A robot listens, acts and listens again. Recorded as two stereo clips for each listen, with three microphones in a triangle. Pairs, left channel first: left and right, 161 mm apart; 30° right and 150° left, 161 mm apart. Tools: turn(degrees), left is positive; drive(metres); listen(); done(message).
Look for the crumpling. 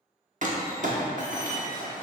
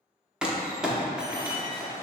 turn(degrees=-125)
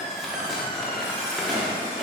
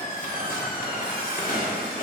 done("Facing the crumpling, under 1 m away.")